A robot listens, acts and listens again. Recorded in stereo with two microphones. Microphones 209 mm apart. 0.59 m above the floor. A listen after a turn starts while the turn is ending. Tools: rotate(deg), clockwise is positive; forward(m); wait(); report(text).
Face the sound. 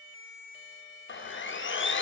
rotate(-65)
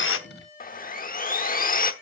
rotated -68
rotate(-45)
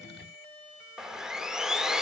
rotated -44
report("Found it: sawing, straight ahead, under 1 m away.")